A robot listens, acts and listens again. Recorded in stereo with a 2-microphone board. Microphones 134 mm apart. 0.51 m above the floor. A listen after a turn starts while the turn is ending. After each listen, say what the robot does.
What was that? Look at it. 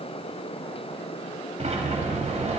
Turn 55° right.
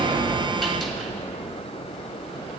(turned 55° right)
Found it: a sliding door, straight ahead.